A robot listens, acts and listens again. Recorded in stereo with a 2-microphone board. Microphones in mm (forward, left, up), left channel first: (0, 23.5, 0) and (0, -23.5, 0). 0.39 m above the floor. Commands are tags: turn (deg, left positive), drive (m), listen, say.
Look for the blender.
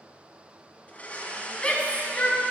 <turn deg="30"/>
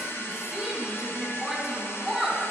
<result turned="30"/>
<turn deg="125"/>
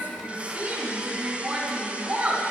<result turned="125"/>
<turn deg="-25"/>
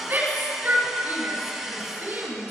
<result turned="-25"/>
<say>Facing the blender.</say>